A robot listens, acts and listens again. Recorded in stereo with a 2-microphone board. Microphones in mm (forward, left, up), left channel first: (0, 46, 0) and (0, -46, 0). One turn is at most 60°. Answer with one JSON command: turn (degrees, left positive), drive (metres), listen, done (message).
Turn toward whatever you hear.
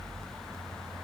{"listen": true}
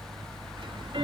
{"turn": -60}
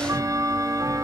{"turn": -40}
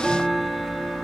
{"done": "Found it: ticking, straight ahead."}